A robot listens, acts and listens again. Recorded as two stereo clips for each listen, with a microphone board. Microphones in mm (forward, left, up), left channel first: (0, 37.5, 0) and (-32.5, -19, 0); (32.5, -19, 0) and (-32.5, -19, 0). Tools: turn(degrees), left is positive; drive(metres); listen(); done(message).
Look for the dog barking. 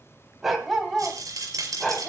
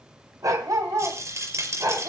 turn(degrees=140)
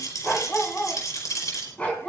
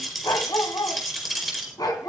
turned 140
turn(degrees=-10)
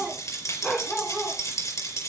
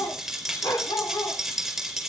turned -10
turn(degrees=-10)
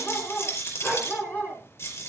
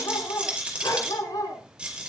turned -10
done("Found it: a dog barking, straight ahead, over 4 m away.")